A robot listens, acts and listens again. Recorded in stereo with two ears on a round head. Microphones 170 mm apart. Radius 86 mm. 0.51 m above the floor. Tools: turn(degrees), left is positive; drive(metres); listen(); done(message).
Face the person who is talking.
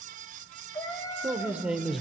turn(degrees=30)
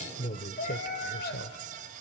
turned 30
turn(degrees=120)
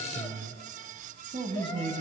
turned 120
turn(degrees=-30)
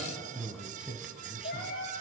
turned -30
done("Facing the man speaking, 2 to 4 m away.")